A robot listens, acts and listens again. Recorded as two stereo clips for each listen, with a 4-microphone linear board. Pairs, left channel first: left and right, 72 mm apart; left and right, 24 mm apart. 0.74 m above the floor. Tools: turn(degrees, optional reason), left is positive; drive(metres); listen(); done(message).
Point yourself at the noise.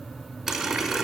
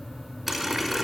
turn(degrees=-30)
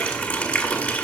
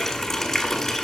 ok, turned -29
turn(degrees=20, reason="So it is at 20° left.")
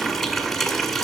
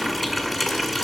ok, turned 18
done("Found it: a running tap, straight ahead.")